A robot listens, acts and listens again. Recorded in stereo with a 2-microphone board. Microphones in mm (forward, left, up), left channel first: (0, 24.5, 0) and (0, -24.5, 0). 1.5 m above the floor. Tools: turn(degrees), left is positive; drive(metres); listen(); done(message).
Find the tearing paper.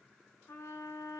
listen()
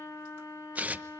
turn(degrees=-30)
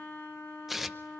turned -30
done("Facing the tearing paper, under 1 m away.")